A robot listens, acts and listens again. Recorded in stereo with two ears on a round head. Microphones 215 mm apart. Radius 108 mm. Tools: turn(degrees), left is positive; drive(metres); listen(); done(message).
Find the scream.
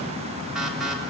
listen()
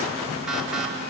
listen()
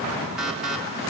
done("I can't make out a scream, only an alarm.")